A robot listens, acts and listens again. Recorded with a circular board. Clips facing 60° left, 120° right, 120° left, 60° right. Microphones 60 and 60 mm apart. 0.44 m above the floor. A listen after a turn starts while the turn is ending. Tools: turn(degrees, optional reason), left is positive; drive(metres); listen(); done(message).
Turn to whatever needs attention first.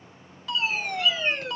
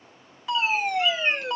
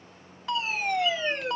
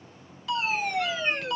turn(degrees=170, reason="The fire alarm: 170° left.")
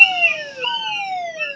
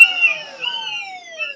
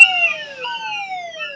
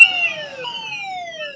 turn(degrees=20, reason="The fire alarm is now 20° left.")
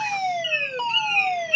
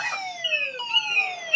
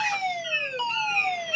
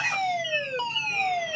done("Facing the fire alarm.")